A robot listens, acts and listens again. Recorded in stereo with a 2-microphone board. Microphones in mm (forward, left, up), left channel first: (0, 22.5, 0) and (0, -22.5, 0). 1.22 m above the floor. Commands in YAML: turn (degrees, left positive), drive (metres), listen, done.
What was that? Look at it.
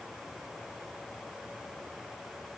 listen: true
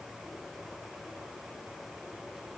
listen: true
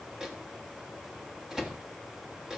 turn: -30
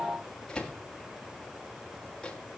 turn: 15
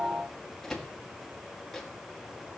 done: "Facing the microwave, 2 to 4 m away."